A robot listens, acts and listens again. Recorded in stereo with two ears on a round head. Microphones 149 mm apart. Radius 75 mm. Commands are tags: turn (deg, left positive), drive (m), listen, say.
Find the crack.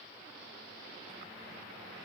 <listen/>
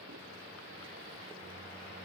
<listen/>
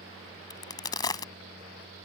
<turn deg="25"/>
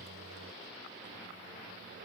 <listen/>
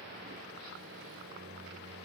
<say>I heard a crack, but can't make it out now. It was about straight ahead or 130° left.</say>